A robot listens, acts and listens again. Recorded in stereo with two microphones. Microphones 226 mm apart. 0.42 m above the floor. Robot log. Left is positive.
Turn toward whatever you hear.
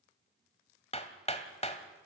note: The hammering: about 30° left or 150° left.
cmd yaw +30
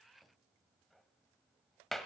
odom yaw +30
end: Found it: hammering, straight ahead, 1 to 2 m away.